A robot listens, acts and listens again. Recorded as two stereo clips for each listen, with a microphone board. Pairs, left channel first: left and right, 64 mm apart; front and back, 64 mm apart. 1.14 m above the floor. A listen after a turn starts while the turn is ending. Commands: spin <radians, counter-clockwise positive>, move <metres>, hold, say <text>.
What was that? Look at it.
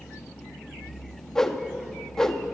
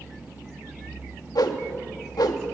spin 0.17
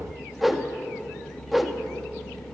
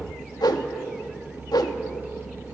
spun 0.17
say Facing the whoosh, 1 to 2 m away.